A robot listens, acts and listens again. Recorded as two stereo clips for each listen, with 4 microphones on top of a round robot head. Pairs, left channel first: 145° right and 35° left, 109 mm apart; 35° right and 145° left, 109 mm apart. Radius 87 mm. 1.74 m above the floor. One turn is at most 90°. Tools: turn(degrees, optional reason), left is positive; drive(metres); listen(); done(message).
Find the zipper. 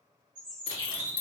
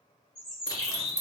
turn(degrees=-90, reason="The zipper: 100° right.")
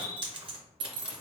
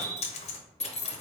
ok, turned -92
done("Found it: a zipper, straight ahead.")